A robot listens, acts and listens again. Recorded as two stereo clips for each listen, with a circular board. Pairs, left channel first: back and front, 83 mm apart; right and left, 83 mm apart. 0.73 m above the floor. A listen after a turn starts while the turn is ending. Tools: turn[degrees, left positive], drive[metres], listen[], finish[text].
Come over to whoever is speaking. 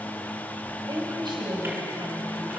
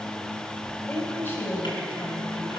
Thought: The woman speaking: 30° right.
Action: turn[-30]
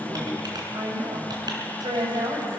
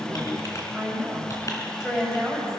Action: drive[1.0]
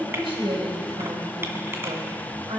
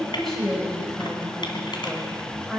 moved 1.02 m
Action: drive[1.0]
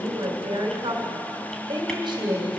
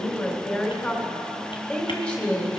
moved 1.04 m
Thought: The woman speaking is now 15° right.
Action: turn[-15]
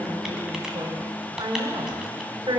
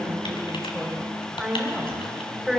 Action: drive[1.0]
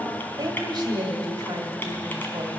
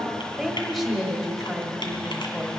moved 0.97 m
Action: drive[1.0]
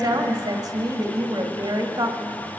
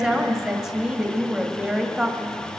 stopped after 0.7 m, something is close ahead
Action: finish[Arrived at the woman speaking, straight ahead.]